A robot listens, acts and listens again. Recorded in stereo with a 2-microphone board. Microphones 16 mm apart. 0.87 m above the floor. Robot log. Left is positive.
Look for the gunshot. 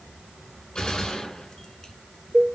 note: The gunshot: about 55° left or 125° left.
cmd yaw +55
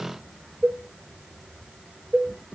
cmd idle
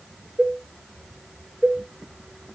end: I heard a gunshot, but can't make it out now. It was about straight ahead or 70° left.